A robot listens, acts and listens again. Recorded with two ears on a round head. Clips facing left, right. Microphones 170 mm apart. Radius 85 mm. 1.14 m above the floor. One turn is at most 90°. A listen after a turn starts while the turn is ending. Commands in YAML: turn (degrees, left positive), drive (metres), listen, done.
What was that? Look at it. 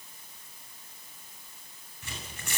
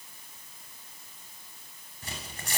turn: -30
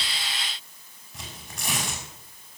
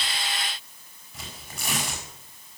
done: "Found it: tearing paper, straight ahead, over 4 m away."